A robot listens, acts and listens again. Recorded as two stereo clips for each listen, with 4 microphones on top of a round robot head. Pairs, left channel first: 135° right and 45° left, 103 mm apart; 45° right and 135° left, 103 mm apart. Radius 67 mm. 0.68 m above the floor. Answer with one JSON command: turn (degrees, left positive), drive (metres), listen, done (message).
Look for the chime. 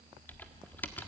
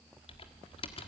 {"listen": true}
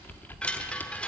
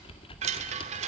{"turn": 145}
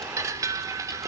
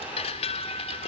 {"turn": -15}
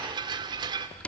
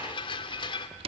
{"done": "Found it: a chime, straight ahead, 1 to 2 m away."}